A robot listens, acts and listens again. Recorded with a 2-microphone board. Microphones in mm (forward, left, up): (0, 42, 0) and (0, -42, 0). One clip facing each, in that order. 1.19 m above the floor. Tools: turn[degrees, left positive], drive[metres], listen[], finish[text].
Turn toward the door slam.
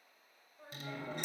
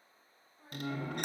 Thought: The door slam: about 60° right or 120° right.
Action: turn[-60]
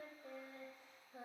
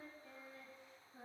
Action: listen[]
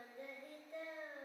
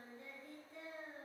Action: finish[I heard a door slam, but can't make it out now. It was about straight ahead or 60° right.]